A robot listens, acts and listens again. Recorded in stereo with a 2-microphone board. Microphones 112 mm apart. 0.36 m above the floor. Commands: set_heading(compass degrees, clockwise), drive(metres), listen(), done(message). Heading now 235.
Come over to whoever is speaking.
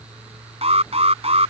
listen()
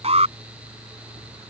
listen()
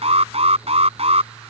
done("I can't make out anyone speaking to turn to.")